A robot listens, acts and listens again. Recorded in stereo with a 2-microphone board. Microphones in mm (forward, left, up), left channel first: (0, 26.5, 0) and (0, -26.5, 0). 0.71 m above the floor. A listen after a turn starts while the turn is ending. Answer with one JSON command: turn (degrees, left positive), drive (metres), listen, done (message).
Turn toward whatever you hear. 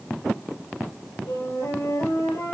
{"turn": 90}
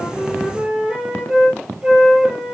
{"turn": -15}
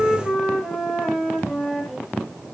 {"done": "Facing the flute, over 4 m away."}